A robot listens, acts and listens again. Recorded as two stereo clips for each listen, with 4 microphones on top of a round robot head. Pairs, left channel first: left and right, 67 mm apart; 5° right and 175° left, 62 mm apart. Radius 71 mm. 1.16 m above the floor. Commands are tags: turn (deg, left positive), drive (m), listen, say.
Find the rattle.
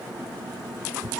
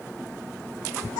<listen/>
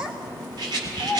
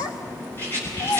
<turn deg="-65"/>
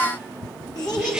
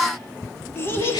<listen/>
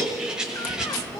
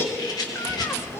<say>Facing the rattle.</say>